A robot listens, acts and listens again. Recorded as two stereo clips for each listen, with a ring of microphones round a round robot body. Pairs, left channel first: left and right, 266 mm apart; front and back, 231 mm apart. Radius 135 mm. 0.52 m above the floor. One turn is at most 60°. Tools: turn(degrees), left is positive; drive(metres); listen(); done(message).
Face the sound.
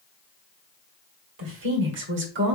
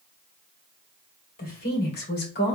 turn(degrees=-45)
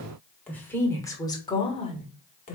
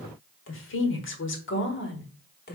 turn(degrees=35)
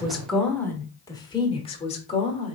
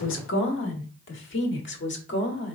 turn(degrees=25)
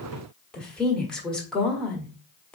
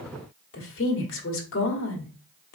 done("Found it: a woman speaking, straight ahead, 1 to 2 m away.")